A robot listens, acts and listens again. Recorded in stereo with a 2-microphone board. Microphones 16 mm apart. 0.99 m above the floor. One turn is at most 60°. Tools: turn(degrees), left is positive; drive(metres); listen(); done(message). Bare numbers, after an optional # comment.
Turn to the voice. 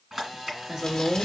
# The woman speaking: about 65° right or 115° right.
turn(-60)
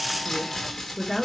# So it is at 10° right.
turn(-10)
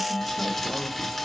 listen()
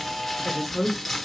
done("Facing the woman speaking, 2 to 4 m away.")